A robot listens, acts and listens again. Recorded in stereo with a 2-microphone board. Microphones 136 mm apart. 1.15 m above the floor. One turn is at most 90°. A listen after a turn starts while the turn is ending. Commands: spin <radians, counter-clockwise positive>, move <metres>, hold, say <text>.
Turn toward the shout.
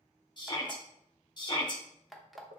spin 0.61
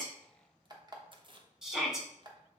say Found it: a shout, straight ahead.